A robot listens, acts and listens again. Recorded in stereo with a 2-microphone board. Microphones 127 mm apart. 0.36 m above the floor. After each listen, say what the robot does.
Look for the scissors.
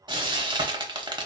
Keep listening.
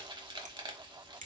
Turn 90° right.
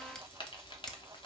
Keep listening.
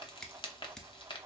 Found it: scissors, straight ahead.